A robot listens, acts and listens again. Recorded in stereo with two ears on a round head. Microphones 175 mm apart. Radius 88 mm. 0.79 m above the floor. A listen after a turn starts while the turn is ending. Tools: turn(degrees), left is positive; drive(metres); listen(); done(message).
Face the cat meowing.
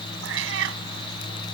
turn(degrees=-75)
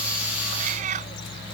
turn(degrees=-40)
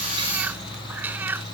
turn(degrees=-10)
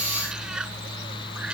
done("Found it: a cat meowing, straight ahead.")